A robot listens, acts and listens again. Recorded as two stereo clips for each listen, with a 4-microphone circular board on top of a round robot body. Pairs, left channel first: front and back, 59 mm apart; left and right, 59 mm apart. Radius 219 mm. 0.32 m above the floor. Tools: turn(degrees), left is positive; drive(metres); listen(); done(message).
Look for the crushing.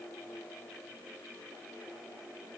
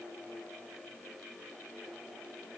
listen()
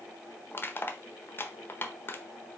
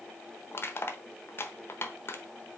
turn(degrees=45)
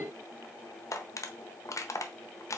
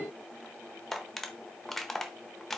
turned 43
done("Found it: crushing, straight ahead.")